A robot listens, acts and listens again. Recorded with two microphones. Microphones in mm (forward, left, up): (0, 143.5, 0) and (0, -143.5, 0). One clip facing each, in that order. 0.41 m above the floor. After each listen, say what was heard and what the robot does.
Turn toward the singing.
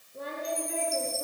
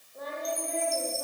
The singing: about 35° left or 145° left. Turn 35° left.
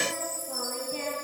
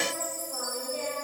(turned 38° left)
So it is at 105° left. Turn 105° left.
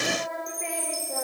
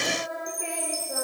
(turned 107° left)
The singing is now 10° right. Turn 10° right.
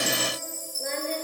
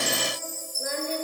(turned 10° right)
The singing is now 10° right. Turn 10° right.
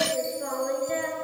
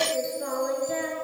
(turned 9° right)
Facing the singing.